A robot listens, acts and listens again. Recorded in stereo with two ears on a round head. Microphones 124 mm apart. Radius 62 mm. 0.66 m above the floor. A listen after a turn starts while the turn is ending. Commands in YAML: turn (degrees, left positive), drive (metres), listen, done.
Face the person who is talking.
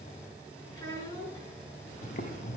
turn: 25
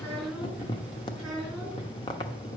done: "Found it: a child speaking, straight ahead."